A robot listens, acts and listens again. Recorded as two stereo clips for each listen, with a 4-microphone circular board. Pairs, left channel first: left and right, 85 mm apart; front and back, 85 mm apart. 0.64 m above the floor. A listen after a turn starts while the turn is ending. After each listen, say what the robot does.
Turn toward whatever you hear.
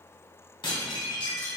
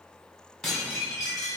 Turn 85° left.
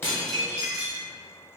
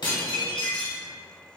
Turn 15° right.
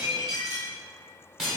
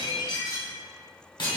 Found it: dishes clattering, straight ahead, 1 to 2 m away.